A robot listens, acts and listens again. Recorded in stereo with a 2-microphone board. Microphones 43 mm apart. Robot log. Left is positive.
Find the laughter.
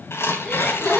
note: The laughter: about 25° left or 155° left.
cmd yaw +25
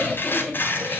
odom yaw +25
end: Facing the laughter, over 4 m away.